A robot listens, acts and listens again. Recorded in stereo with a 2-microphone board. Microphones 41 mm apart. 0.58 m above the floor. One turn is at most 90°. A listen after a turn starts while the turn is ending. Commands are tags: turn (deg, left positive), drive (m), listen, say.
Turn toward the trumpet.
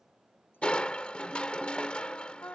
<turn deg="90"/>
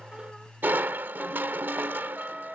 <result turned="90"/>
<say>Found it: a trumpet, straight ahead.</say>